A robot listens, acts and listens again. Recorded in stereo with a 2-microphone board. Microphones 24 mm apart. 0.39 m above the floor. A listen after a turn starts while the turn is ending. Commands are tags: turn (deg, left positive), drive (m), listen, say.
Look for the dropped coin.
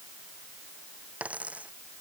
<turn deg="-90"/>
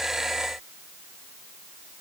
<say>Facing where the dropped coin came from. I can't hear it now.</say>